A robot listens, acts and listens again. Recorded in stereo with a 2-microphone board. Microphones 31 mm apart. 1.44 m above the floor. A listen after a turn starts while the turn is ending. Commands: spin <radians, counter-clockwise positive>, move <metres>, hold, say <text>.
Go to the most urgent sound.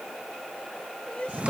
spin 0.70
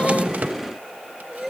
move 1.0
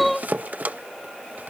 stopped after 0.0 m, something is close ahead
say Something is in my way. I am facing the crying but have not reached it.